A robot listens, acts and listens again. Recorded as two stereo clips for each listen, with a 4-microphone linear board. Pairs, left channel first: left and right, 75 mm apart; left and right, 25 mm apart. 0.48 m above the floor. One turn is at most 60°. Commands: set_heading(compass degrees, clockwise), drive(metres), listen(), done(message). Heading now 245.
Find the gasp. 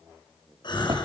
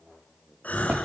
set_heading(185)
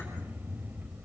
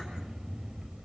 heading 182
set_heading(157)
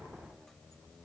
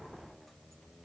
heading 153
done("Facing where the gasp came from. I can't hear it now.")